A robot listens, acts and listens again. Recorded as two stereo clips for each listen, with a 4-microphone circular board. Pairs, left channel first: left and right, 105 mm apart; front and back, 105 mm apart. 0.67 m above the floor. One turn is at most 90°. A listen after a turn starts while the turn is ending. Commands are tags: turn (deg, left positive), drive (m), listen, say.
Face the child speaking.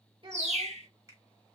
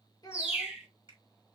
<turn deg="-50"/>
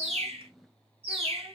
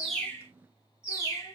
<listen/>
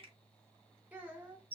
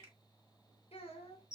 <turn deg="-15"/>
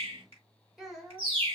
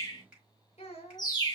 <say>Facing the child speaking, 1 to 2 m away.</say>